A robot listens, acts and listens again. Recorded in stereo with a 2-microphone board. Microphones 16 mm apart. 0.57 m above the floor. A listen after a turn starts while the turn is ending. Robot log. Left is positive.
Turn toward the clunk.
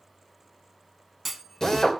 cmd yaw +30
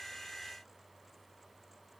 cmd idle
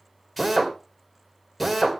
end: I heard a clunk, but can't make it out now. It was about 30° right or 150° left.